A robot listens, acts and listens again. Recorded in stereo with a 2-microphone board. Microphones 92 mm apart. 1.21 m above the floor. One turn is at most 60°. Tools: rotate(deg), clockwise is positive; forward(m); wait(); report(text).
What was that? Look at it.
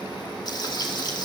rotate(-50)
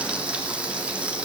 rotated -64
rotate(10)
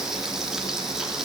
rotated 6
report("Facing the frying, 2 to 4 m away.")